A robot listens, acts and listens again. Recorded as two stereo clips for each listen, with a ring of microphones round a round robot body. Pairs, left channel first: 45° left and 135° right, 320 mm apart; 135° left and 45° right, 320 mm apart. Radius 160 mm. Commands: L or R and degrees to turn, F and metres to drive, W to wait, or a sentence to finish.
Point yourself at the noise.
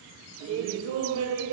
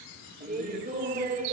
R105
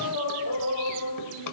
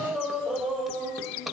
L45
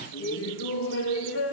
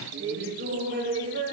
Facing the laughter.